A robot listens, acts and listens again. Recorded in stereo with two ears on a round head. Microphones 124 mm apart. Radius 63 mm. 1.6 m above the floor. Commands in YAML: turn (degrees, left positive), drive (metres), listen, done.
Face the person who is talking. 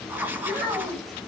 turn: -30
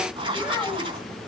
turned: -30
done: "Facing the child speaking."